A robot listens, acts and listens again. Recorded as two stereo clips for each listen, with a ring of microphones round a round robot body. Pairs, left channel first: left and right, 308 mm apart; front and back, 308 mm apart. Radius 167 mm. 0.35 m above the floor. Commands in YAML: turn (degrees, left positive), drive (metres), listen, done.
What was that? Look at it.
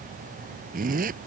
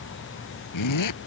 turn: -25
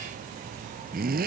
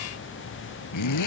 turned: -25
turn: -25
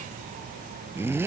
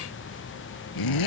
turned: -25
done: "Facing the zipper."